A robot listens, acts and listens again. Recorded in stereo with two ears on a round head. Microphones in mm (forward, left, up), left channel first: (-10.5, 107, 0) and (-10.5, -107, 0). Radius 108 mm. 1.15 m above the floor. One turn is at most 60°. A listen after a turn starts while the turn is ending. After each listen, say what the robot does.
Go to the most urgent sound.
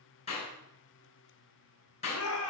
Turn 60° left.
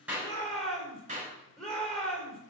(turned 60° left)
Drive 1.0 m forward.
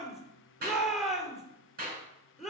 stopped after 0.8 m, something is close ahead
Blocked. The shout is further on, straight ahead.